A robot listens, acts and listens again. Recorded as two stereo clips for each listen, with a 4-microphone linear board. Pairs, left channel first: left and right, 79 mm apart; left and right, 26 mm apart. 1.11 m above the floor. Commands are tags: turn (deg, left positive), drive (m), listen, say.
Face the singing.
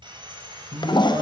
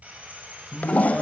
<turn deg="-40"/>
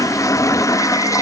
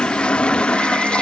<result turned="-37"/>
<listen/>
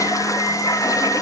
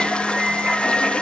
<turn deg="-95"/>
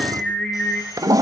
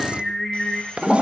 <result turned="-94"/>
<turn deg="10"/>
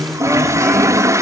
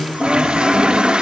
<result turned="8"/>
<say>Found it: singing, straight ahead.</say>